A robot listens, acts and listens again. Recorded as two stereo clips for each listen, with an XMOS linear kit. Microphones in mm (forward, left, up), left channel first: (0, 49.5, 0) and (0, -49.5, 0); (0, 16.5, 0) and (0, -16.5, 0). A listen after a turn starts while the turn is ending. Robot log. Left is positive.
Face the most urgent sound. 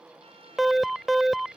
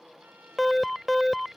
cmd yaw +30
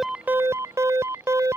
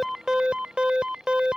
note: So it is at 30° right.
cmd yaw -30
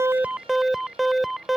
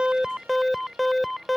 end: Found it: an alarm, straight ahead.